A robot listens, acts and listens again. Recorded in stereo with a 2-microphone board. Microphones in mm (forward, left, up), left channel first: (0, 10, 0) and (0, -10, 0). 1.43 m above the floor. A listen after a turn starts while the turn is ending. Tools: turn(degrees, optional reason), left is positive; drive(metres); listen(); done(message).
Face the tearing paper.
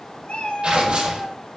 turn(degrees=-60, reason="The tearing paper: about 60° right or 120° right.")
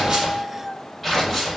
done("Found it: tearing paper, straight ahead, over 4 m away.")